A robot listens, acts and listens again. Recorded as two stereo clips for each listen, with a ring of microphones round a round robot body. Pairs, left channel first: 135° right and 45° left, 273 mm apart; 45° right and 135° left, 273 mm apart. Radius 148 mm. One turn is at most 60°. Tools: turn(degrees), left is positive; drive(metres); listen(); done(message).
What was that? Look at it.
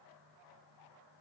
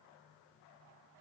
listen()
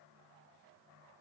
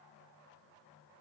listen()
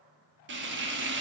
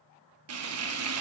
turn(degrees=60)
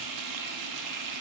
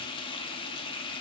turn(degrees=30)
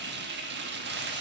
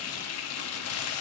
turn(degrees=-10)
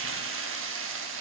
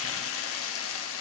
done("Found it: frying, straight ahead, 1 to 2 m away.")